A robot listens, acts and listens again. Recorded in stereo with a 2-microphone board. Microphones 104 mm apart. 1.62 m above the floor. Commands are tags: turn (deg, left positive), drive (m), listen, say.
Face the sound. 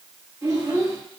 <turn deg="-25"/>
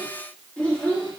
<turn deg="15"/>
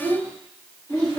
<turn deg="25"/>
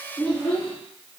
<turn deg="15"/>
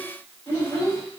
<turn deg="15"/>
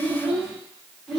<say>Found it: a child speaking, straight ahead.</say>